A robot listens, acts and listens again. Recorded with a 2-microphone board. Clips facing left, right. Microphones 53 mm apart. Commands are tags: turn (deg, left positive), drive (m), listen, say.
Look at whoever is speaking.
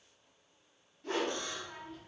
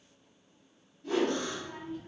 <turn deg="-15"/>
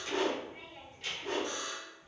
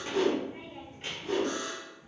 <turn deg="-150"/>
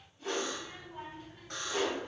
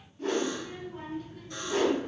<turn deg="20"/>
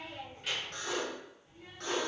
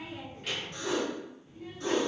<say>Facing the child speaking, 1 to 2 m away.</say>